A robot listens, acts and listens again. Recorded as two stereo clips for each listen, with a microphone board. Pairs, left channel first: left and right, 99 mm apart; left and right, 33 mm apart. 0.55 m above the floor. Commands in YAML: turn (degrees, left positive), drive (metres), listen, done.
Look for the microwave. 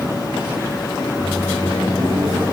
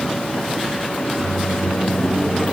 turn: -25
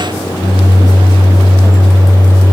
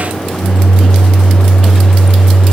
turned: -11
turn: -35
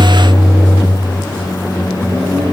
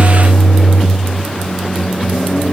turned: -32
turn: -105
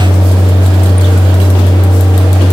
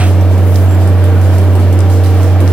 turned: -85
turn: -15
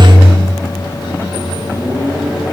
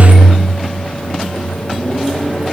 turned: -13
done: "Found it: a microwave, straight ahead."